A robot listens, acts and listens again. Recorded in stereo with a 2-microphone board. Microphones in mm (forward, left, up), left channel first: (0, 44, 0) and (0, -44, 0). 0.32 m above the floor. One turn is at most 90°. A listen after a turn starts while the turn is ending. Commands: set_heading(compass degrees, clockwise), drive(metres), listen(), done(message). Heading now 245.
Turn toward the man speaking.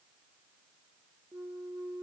listen()
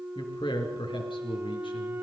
set_heading(155)
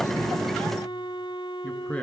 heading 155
set_heading(140)
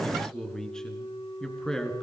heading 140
set_heading(130)
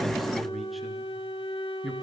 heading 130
done("Facing the man speaking, over 4 m away.")